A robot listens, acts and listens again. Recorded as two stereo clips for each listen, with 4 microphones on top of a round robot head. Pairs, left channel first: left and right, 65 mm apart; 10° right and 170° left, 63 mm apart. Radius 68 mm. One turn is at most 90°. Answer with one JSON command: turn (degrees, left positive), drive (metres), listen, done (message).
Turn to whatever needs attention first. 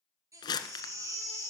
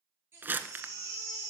{"turn": -90}
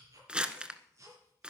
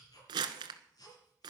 {"turn": -40}
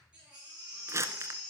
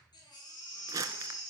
{"turn": -10}
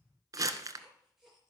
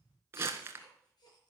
{"listen": true}
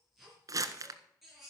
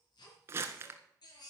{"done": "Facing the baby crying, over 4 m away."}